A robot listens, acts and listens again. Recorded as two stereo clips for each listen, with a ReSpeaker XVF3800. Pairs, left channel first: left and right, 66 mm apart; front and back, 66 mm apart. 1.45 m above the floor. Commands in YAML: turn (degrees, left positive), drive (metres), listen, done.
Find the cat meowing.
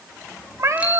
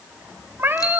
turn: -120
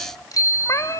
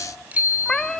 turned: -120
turn: 85
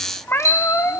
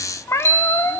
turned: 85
turn: 45
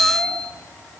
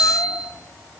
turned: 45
listen: true
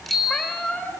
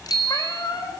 turn: 10
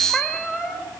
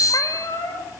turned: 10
done: "Facing the cat meowing."